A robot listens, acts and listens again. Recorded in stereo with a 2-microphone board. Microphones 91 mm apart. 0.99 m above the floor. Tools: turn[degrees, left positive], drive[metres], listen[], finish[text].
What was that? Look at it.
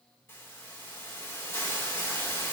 Thought: The hiss: about 30° left or 150° left.
Action: turn[30]
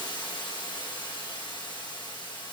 Thought: So it is at 120° left.
Action: turn[120]
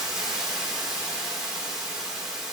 Thought: The hiss is now 10° right.
Action: turn[-10]
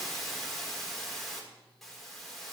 Action: finish[Found it: a hiss, straight ahead.]